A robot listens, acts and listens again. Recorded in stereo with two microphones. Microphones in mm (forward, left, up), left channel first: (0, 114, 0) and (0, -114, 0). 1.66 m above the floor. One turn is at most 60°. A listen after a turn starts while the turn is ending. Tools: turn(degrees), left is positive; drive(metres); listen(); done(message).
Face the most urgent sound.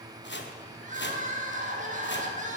turn(degrees=-35)
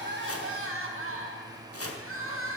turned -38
turn(degrees=-60)
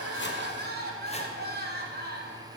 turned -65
turn(degrees=-45)
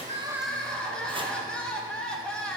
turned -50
done("Facing the crying, 1 to 2 m away.")